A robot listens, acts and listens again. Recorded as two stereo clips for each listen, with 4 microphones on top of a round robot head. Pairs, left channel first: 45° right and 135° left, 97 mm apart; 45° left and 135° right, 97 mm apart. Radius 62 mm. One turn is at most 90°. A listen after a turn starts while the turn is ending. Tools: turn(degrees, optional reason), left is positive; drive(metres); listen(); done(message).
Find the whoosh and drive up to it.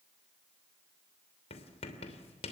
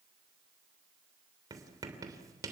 listen()
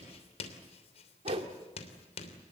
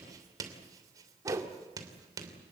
turn(degrees=90, reason="The whoosh: 165° left.")
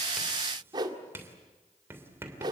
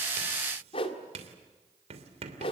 turn(degrees=85, reason="The whoosh is now 85° left.")
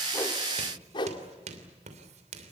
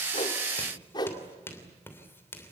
drive(metres=1.0)
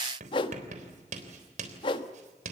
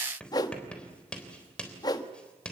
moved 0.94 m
drive(metres=1.0)
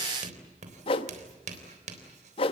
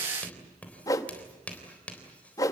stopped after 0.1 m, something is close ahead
turn(degrees=-10, reason="The whoosh is now 10° right.")
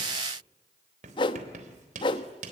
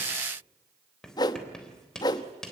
done("I am next to the whoosh.")